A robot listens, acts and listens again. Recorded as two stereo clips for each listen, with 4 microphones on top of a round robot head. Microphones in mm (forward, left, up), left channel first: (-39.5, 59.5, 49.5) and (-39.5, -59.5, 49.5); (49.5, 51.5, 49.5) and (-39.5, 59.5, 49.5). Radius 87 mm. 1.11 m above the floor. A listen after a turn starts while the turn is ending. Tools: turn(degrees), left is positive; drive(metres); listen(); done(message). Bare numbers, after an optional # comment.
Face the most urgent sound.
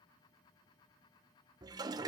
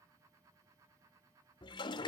listen()
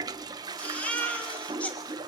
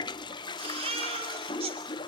# The baby crying: 170° left.
turn(170)
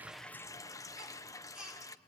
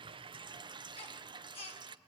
done("Found it: a baby crying, straight ahead.")